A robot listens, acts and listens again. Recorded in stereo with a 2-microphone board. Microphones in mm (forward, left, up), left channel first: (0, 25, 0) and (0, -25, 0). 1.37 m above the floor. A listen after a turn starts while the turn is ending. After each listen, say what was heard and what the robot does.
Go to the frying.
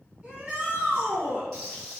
Turn 30° left.
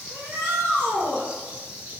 So it is at 145° left. Turn 145° left.
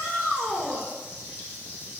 The frying is now 45° left. Turn 45° left.
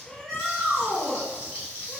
The frying is now 30° left. Turn 30° left.
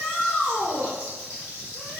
The frying is now 15° left. Turn 15° left.
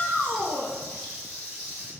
Drive 1.0 m forward.
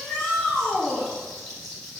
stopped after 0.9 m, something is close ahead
The frying is now 10° left. Turn 10° left.
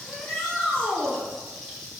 I am next to the frying.